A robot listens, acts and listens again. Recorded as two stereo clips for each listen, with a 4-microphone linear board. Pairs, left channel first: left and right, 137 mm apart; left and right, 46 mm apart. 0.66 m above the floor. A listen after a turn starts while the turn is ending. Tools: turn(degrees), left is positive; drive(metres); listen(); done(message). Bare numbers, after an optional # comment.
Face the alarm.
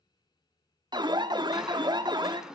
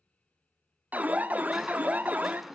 # The alarm: about 35° right or 145° right.
turn(-35)
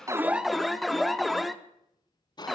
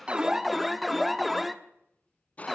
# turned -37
done("Found it: an alarm, straight ahead.")